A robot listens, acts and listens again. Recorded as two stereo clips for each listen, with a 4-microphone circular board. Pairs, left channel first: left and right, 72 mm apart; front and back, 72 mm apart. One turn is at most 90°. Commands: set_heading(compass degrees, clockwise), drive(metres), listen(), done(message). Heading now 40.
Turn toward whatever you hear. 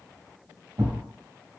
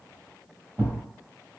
set_heading(130)
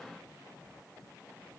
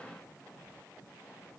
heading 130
set_heading(160)
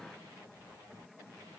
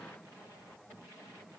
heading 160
done("Facing where the thud came from. I can't hear it now.")